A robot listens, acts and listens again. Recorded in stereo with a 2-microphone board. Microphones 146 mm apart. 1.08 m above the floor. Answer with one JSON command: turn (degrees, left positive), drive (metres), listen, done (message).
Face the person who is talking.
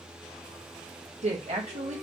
{"turn": -50}
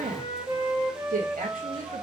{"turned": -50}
{"turn": -75}
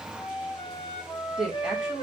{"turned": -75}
{"done": "Found it: a woman speaking, straight ahead."}